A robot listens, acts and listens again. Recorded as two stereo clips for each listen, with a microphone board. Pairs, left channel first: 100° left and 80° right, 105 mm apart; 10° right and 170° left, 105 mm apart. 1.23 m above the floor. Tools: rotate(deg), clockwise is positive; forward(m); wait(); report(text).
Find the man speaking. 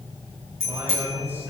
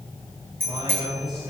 rotate(150)
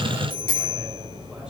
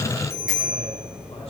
wait()
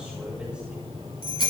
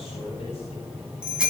wait()
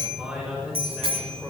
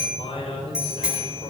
report("Facing the man speaking.")